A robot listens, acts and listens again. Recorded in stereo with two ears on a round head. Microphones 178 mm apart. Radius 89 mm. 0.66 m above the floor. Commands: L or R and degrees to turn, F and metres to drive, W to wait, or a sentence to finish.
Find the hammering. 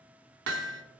R65
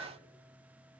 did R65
W
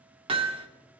R30
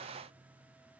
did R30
W
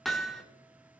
Facing the hammering.